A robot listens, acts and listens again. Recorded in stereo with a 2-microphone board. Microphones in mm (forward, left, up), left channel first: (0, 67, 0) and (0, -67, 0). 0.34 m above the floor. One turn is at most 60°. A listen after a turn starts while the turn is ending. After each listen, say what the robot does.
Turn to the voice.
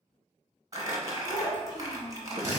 Turn 35° left.
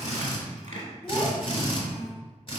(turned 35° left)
Keep listening.
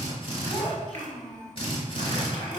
Found it: a child speaking, straight ahead, 1 to 2 m away.